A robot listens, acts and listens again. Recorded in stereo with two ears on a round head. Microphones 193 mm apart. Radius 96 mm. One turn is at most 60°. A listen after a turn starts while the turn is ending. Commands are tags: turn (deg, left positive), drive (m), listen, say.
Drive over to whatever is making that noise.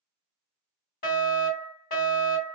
<turn deg="40"/>
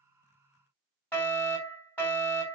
<turn deg="10"/>
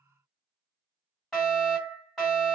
<drive m="1.0"/>
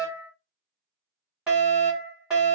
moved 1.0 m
<drive m="1.0"/>
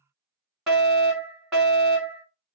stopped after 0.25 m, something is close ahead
<say>I am next to the fire alarm.</say>